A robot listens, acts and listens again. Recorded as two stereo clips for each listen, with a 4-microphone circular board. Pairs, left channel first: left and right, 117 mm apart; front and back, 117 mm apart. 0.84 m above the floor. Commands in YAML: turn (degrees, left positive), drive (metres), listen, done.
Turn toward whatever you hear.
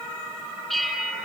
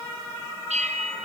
turn: 180
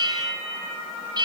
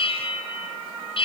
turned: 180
turn: -35
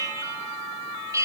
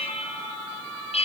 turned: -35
turn: -25
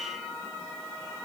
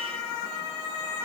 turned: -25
listen: true
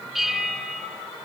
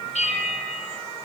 done: "Facing the bell, over 4 m away."